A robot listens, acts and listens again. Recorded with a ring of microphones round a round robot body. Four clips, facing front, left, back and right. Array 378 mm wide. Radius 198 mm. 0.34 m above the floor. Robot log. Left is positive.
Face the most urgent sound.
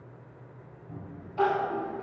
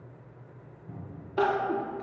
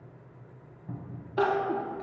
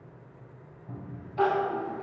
note: The crying: 140° left.
cmd yaw +140
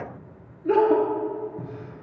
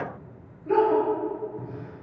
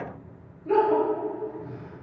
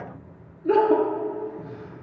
note: The crying is now 50° right.
cmd yaw -50
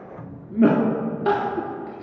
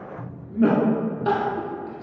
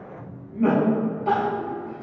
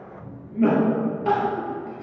end: Found it: crying, straight ahead, 1 to 2 m away.